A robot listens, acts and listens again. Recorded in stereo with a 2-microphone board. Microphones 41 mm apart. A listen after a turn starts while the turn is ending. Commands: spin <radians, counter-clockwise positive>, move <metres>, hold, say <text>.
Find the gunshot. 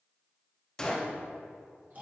spin 0.26
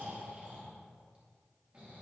hold
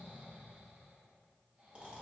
say I heard a gunshot, but can't make it out now. It was about straight ahead or 150° left.